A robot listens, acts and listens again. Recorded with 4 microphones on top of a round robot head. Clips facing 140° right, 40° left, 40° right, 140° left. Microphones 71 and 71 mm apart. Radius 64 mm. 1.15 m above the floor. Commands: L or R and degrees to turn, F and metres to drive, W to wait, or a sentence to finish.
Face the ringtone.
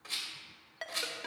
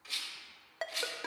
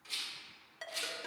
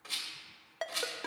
L100
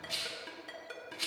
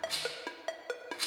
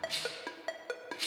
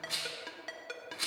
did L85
L20
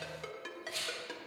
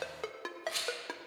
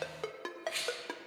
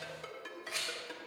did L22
Found it: a ringtone, straight ahead.